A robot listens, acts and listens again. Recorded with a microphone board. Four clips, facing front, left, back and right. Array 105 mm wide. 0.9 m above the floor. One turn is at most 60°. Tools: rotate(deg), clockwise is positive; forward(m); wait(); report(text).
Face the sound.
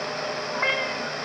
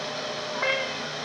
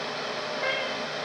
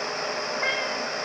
rotate(-20)
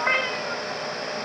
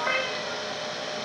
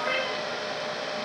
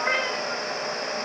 report("Facing the cat meowing.")